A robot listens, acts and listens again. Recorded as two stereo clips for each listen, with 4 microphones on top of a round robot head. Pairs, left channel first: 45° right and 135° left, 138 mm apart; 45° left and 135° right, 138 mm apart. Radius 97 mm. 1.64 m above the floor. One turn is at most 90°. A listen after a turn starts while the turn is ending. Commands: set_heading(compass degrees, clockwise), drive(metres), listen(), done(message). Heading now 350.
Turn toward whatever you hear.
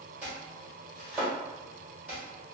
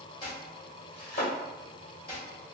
set_heading(295)
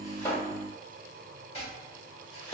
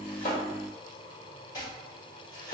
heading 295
done("Found it: chopping, straight ahead.")